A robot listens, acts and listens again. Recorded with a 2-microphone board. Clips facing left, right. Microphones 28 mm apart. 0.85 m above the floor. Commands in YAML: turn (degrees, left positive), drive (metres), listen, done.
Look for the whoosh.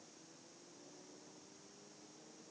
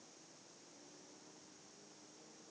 listen: true
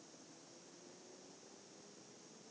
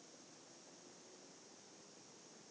listen: true
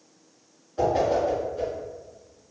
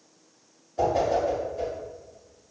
turn: 30
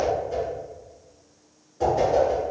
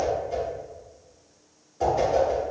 done: "Found it: a whoosh, straight ahead, 2 to 4 m away."